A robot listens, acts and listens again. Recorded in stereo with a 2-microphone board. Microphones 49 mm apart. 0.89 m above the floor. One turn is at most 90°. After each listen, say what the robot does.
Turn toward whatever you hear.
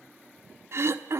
Turn 60° right.
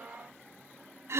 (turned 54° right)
Turn 65° right.
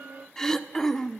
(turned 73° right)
Turn 10° left.
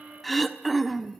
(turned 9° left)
Found it: throat clearing, straight ahead, 1 to 2 m away.